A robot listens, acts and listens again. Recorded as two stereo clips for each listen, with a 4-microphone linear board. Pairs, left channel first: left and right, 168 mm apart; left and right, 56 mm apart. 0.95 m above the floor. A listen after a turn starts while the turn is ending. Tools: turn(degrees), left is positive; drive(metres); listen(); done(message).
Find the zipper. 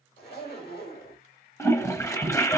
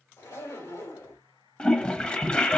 turn(degrees=90)
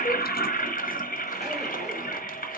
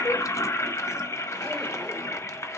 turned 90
listen()
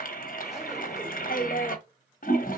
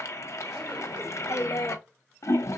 listen()
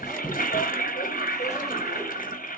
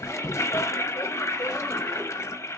done("I heard a zipper from this way, but can't make it out now.")